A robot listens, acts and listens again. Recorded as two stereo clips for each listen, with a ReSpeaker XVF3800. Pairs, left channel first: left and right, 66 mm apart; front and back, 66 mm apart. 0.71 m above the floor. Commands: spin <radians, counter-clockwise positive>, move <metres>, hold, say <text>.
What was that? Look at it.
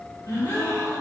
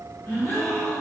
spin 1.05
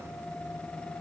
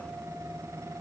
say Facing where the gasp came from. I can't hear it now.